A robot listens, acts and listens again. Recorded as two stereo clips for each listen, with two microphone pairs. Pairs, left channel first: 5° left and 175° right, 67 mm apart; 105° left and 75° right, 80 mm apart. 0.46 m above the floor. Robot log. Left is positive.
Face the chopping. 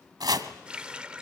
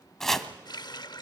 note: The chopping: 170° right.
cmd yaw -170
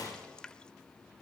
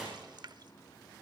cmd idle
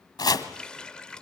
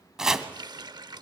note: The chopping is now 10° left.
cmd yaw +10
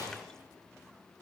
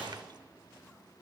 cmd idle
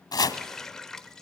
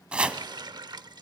end: Facing the chopping.